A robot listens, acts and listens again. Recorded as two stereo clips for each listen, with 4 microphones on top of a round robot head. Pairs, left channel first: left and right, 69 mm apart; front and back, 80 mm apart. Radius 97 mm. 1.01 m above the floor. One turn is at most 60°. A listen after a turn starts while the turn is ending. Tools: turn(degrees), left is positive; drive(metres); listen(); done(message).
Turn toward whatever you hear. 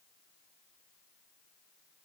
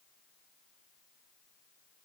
listen()
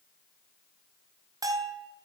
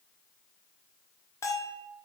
turn(degrees=-55)
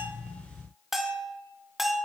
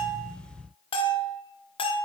done("Found it: a bell, straight ahead, 1 to 2 m away.")